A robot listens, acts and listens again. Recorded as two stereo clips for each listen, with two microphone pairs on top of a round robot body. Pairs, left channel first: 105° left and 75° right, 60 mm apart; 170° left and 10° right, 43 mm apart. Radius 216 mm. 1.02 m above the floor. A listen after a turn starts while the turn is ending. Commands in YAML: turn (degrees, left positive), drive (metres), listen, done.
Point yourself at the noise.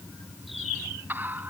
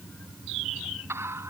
turn: -20
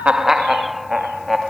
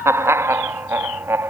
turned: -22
turn: 15
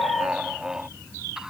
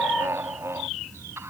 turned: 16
done: "Found it: laughter, straight ahead."